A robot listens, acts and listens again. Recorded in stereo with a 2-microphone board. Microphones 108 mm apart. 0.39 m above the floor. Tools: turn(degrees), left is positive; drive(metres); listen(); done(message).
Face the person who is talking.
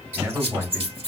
turn(degrees=-20)
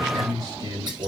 turn(degrees=-135)
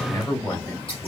turn(degrees=30)
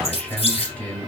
turn(degrees=15)
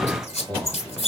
done("Facing the man speaking, 1 to 2 m away.")